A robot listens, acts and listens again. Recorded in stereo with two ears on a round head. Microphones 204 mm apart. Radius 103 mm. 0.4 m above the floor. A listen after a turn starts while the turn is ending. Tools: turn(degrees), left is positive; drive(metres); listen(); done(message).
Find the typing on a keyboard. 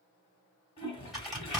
turn(degrees=30)
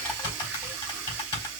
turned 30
turn(degrees=155)
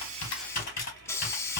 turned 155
turn(degrees=40)
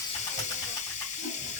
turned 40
listen()
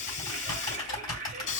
turn(degrees=20)
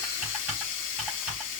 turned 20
listen()
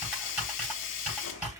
done("Facing the typing on a keyboard, 2 to 4 m away.")